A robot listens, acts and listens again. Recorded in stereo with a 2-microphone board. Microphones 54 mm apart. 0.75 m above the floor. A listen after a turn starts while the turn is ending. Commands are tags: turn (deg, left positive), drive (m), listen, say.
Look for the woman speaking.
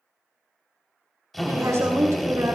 <turn deg="-90"/>
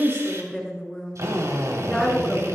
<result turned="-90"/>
<say>Facing the woman speaking.</say>